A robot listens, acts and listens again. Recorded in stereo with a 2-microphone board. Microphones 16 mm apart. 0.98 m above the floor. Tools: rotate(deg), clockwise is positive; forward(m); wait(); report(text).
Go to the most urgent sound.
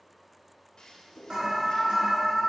rotate(90)
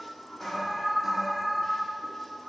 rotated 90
forward(1.0)
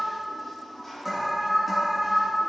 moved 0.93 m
forward(1.0)
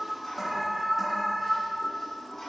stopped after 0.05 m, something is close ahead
rotate(10)
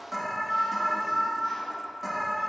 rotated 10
report("I am next to the alarm.")